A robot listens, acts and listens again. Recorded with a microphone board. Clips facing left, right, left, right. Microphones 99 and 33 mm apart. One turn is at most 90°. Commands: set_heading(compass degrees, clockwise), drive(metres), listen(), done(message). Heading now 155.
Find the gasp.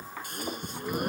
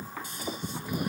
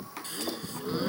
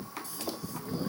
set_heading(100)
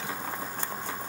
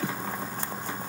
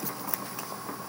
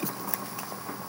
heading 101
listen()
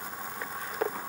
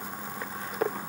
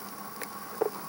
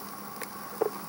done("I heard a gasp, but can't make it out now. It was about straight ahead or 70° left.")